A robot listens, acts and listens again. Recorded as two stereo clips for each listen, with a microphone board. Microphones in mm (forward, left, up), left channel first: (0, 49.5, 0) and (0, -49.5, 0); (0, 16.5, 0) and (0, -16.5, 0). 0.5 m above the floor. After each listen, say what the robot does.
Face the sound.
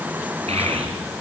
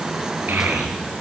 Turn 90° right.
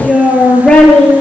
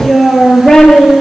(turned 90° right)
Turn 10° left.
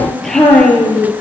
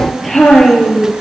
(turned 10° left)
Found it: a child speaking, straight ahead.